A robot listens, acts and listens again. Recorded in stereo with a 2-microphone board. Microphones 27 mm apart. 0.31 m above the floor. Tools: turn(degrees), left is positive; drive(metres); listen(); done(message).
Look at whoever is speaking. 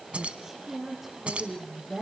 turn(degrees=-30)
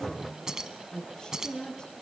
turn(degrees=35)
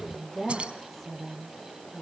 turn(degrees=15)
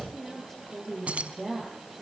done("Found it: a woman speaking, straight ahead.")